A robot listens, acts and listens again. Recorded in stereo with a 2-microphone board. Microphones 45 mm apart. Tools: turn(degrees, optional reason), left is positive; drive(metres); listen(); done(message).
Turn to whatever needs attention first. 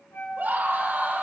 turn(degrees=-45, reason="The scream: about 45° right or 135° right.")
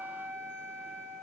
listen()
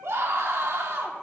turn(degrees=-90, reason="So it is at 90° right.")
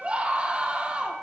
turn(degrees=-25, reason="The scream is now 25° right.")
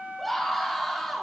done("Facing the scream.")